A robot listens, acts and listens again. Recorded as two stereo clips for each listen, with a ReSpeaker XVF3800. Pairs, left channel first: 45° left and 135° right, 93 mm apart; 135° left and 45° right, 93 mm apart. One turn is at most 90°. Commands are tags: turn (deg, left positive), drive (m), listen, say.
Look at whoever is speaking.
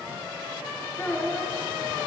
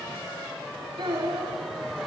<turn deg="-20"/>
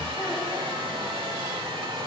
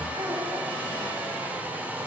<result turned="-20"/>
<listen/>
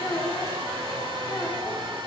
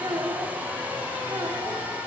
<say>Facing the child speaking, over 4 m away.</say>